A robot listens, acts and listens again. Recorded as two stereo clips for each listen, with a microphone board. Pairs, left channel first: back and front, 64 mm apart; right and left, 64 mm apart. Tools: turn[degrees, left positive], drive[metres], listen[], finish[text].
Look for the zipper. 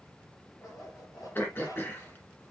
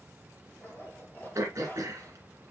Thought: The zipper: 150° right.
Action: turn[-150]
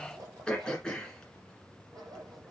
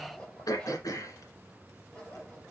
Thought: The zipper is now 15° right.
Action: turn[-15]
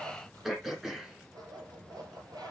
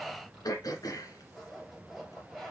Action: finish[Facing the zipper.]